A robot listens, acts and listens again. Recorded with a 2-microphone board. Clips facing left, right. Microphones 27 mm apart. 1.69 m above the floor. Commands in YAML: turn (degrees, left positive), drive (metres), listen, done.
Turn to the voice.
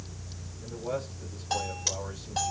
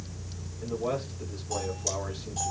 turn: -90
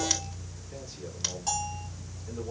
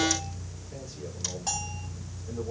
listen: true
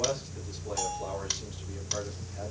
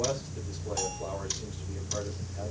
turn: 15
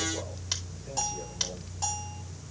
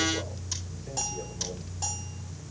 listen: true
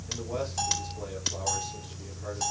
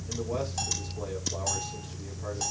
listen: true
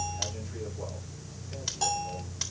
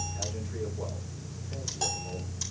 done: "Facing where the man speaking came from. I can't hear it now."